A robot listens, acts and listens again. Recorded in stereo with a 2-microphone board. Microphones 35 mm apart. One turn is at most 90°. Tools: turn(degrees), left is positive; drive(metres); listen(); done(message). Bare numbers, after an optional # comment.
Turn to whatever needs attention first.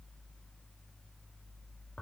listen()
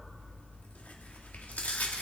listen()
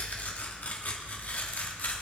done("I can't make out anything urgent to turn to.")